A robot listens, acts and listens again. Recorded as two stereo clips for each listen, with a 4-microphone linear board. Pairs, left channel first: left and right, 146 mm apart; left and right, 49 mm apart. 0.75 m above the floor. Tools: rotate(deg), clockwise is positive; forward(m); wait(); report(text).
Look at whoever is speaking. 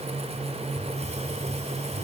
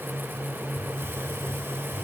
wait()
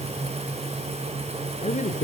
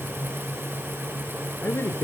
rotate(-55)
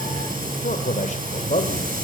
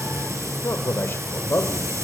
rotate(-50)
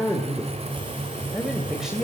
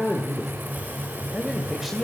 report("Facing the man speaking.")